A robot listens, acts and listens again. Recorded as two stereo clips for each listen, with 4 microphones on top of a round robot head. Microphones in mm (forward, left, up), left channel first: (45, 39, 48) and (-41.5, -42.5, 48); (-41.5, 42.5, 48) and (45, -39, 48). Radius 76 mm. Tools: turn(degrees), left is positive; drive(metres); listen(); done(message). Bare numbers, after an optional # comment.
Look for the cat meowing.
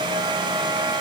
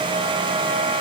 listen()
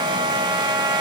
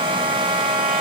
listen()
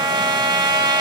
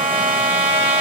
done("I can't make out a cat meowing to turn to.")